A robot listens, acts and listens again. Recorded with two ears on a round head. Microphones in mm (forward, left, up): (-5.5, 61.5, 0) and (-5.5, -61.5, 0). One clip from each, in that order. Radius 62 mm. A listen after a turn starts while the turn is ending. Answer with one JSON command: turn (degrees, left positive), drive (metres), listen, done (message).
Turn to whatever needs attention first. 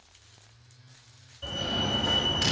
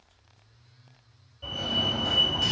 {"turn": 25}
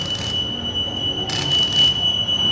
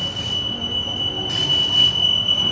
{"done": "Facing the fire alarm."}